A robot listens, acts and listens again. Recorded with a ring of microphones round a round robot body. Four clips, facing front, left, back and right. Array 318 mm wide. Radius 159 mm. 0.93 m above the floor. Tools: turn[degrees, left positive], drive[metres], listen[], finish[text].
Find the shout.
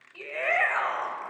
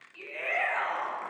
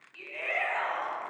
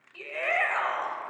Thought: The shout: 25° right.
Action: turn[-25]
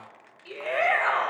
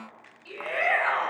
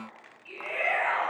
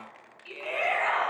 Action: finish[Facing the shout, over 4 m away.]